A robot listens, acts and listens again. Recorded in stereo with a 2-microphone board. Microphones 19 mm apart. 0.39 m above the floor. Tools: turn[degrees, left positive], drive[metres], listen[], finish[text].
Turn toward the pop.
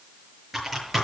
Action: listen[]
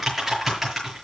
Action: listen[]
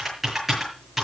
Action: finish[I can't make out a pop to turn to.]